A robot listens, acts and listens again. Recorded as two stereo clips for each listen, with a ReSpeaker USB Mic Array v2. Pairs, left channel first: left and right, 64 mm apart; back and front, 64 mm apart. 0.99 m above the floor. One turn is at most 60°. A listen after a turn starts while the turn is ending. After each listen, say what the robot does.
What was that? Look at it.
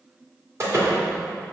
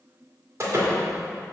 Turn 45° right.
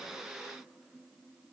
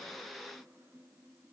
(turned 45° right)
Facing where the door slam came from. I can't hear it now.